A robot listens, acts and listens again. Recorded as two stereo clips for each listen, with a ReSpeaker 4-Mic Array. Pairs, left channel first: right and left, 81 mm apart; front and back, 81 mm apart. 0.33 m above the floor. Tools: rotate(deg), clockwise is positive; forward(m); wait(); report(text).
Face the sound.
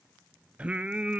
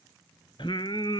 rotate(-15)
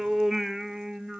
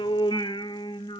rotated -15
report("Facing the singing, under 1 m away.")